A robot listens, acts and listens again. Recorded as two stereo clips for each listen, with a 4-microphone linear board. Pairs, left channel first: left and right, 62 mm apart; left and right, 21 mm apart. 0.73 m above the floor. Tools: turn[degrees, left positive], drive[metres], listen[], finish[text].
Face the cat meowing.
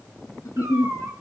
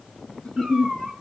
Thought: The cat meowing: about 50° right or 130° right.
Action: turn[-50]
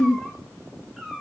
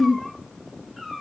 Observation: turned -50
Thought: So it is at 10° right.
Action: turn[-10]
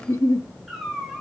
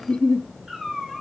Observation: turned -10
Action: finish[Found it: a cat meowing, straight ahead.]